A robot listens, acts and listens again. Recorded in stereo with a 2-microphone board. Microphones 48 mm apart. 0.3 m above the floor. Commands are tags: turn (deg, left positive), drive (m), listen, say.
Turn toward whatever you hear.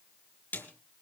<turn deg="40"/>
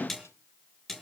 <say>Facing the snare drum.</say>